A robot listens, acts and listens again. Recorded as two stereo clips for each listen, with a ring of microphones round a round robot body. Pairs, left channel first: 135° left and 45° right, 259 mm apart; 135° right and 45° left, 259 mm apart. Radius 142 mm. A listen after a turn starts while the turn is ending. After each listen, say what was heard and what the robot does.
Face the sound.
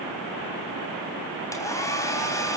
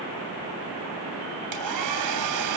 The hair dryer: 55° left. Turn 55° left.
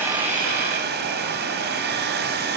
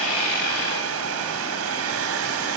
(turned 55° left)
The hair dryer is now 10° left. Turn 10° left.
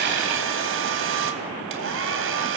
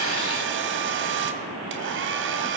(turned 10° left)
Found it: a hair dryer, straight ahead, 2 to 4 m away.